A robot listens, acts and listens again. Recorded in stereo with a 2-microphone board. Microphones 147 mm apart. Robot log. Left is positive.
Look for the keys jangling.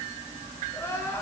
cmd idle
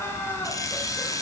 note: The keys jangling: about 20° left or 160° left.
cmd yaw +20
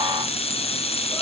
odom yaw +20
note: So it is at 140° left.
cmd yaw +140
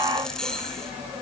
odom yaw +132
end: Found it: keys jangling, straight ahead, 2 to 4 m away.